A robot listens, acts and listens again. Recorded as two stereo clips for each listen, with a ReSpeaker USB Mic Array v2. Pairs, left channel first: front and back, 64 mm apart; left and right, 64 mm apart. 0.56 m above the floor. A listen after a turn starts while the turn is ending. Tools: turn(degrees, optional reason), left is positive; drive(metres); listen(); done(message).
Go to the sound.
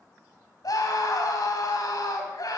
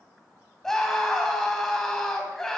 turn(degrees=10, reason="The scream: 10° left.")
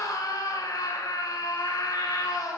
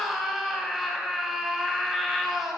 drive(metres=1.0)
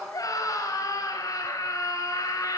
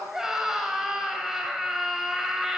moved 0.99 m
drive(metres=1.0)
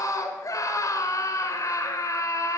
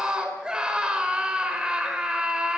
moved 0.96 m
turn(degrees=-15, reason="The scream is now 15° right.")
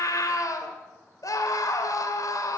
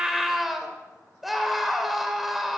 drive(metres=1.0)
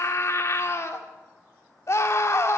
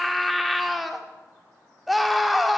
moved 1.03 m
drive(metres=1.0)
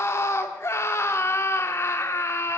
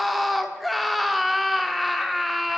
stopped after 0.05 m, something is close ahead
done("Arrived at the scream, straight ahead.")